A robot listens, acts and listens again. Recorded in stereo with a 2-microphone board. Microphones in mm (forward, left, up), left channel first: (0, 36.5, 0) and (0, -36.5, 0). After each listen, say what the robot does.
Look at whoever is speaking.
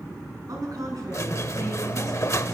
Turn 55° right.
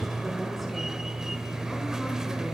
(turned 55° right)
Keep listening.
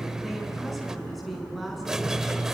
Found it: a woman speaking, straight ahead.